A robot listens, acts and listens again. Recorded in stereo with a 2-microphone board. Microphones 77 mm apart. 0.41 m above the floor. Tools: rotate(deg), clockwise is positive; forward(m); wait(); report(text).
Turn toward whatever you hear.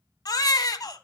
rotate(-55)
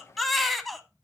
report("Found it: a baby crying, straight ahead, under 1 m away.")